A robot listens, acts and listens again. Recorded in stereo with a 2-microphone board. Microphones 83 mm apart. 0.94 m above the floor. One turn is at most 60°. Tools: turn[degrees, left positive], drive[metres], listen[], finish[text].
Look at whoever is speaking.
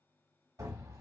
Action: listen[]
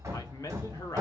Thought: The man speaking: about 45° left or 135° left.
Action: turn[45]
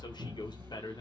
Thought: So it is at 80° left.
Action: turn[60]
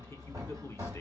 Thought: Nothing new. It was at 20° left.
Action: turn[20]
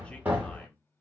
Action: listen[]
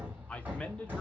Thought: The man speaking is now 15° left.
Action: turn[15]
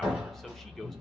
Action: listen[]
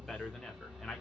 Action: finish[Found it: a man speaking, straight ahead.]